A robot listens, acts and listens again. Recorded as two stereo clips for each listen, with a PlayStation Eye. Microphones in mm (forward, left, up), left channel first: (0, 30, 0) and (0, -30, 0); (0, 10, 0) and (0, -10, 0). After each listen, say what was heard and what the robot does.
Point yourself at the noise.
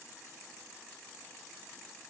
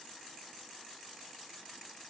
Keep listening.
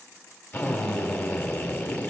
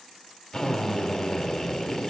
The drill: about 35° left or 145° left. Turn 35° left.
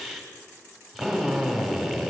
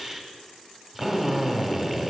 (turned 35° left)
Facing the drill, 2 to 4 m away.